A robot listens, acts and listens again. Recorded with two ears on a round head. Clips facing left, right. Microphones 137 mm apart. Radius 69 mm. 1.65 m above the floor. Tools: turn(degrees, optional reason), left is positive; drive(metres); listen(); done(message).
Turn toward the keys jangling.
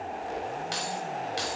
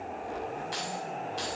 turn(degrees=90)
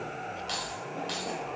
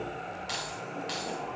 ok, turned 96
done("Found it: keys jangling, straight ahead, over 4 m away.")